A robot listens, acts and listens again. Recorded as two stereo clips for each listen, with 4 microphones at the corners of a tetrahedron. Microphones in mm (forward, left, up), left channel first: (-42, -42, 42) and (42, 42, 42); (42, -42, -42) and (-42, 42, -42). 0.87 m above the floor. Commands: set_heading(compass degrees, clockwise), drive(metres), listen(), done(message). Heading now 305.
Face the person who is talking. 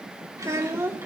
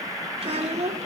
set_heading(190)
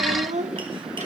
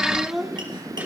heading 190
set_heading(130)
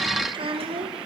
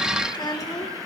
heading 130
set_heading(120)
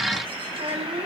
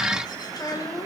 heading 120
set_heading(110)
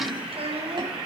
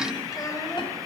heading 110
set_heading(95)
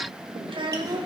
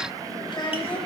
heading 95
done("Facing the child speaking, 2 to 4 m away.")